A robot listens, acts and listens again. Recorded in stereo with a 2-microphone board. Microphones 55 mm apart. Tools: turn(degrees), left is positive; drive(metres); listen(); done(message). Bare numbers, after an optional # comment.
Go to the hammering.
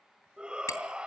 # The hammering: about 70° left or 110° left.
turn(70)
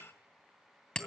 # So it is at 15° left.
turn(15)
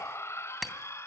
drive(1.0)
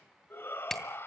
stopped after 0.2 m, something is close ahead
done("Something is in my way. I am facing the hammering but have not reached it.")